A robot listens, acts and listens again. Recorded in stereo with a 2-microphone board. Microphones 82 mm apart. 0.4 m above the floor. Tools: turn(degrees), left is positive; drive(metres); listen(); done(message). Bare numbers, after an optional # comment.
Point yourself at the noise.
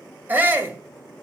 # The shout: about 25° right or 155° right.
turn(-25)
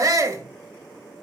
# So it is at 125° right.
turn(-125)
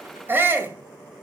# The shout is now 35° right.
turn(-35)
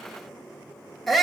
done("Facing the shout.")